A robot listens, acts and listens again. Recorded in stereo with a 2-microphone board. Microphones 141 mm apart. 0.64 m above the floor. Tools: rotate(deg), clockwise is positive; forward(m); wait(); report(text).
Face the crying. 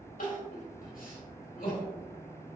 rotate(-90)
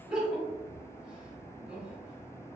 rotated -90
report("Found it: crying, straight ahead.")